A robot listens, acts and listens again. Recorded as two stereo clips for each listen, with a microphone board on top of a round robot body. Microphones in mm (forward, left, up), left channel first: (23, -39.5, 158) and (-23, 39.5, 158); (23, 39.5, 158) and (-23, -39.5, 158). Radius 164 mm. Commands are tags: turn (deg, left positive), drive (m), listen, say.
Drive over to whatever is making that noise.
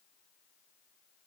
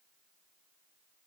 <listen/>
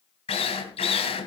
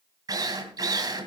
<turn deg="-70"/>
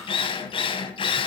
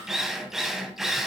<turn deg="-35"/>
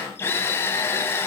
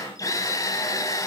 <drive m="1.0"/>
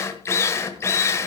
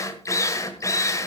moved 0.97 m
<drive m="1.0"/>
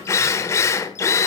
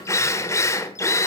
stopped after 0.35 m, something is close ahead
<say>I am next to the drill.</say>